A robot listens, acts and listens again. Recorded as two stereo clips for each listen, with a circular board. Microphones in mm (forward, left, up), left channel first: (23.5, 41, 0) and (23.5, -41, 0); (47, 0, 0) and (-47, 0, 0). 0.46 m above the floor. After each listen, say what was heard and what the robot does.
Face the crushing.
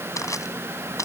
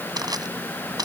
The crushing: 135° left. Turn 135° left.
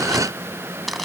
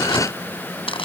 Found it: crushing, straight ahead.